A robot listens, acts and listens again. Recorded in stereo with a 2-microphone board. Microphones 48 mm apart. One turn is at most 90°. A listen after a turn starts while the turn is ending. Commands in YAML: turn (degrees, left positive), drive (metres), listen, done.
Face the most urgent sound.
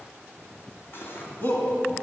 turn: 40
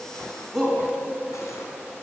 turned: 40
done: "Facing the shout, 2 to 4 m away."